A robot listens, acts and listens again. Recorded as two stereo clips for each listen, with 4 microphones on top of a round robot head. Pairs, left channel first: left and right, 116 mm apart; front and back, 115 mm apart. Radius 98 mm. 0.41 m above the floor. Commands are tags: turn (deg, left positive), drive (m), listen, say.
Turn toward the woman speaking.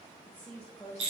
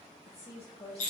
<turn deg="15"/>
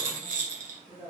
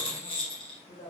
<say>Found it: a woman speaking, straight ahead, 2 to 4 m away.</say>